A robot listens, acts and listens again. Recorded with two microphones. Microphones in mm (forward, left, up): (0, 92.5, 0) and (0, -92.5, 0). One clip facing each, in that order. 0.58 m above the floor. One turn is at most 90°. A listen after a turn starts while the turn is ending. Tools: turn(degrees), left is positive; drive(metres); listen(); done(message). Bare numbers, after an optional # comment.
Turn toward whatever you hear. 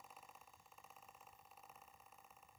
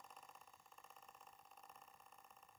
listen()
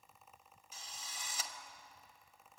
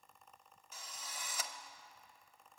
# The drill: about 65° right or 115° right.
turn(-65)
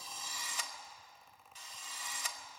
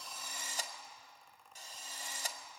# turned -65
# So it is at 45° right.
turn(-45)
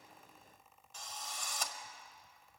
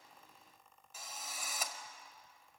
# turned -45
done("Found it: a drill, straight ahead, 1 to 2 m away.")